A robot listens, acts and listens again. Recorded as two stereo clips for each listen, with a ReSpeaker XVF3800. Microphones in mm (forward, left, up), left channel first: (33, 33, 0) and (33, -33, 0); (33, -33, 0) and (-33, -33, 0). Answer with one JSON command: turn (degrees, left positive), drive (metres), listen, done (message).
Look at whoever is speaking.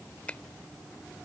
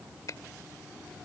{"listen": true}
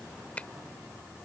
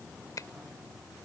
{"listen": true}
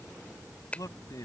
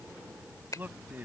{"turn": 115}
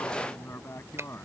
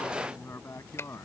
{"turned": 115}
{"turn": 40}
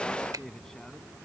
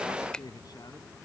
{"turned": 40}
{"turn": 10}
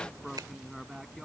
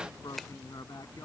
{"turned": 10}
{"done": "Facing the man speaking."}